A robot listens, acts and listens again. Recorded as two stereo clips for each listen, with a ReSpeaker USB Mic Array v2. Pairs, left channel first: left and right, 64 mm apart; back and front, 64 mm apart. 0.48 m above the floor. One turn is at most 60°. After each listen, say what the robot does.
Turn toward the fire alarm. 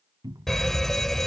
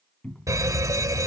Facing the fire alarm.